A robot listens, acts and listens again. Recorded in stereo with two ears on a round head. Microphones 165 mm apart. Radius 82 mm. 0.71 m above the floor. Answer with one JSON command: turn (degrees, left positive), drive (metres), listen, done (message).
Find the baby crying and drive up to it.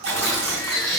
{"turn": 20}
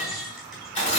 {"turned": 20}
{"drive": 1.0}
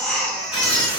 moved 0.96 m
{"drive": 1.0}
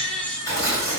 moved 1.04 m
{"drive": 1.0}
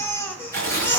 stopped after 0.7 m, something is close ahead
{"turn": 15}
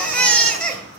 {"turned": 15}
{"done": "I am next to the baby crying."}